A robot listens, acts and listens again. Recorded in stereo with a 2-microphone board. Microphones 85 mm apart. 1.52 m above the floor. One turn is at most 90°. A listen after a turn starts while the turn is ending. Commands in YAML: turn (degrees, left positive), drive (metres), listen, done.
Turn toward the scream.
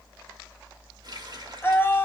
turn: 25
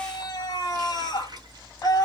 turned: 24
turn: 90
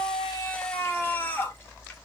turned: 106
turn: 25
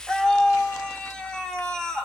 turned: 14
turn: 10
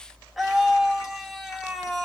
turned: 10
done: "Facing the scream, 1 to 2 m away."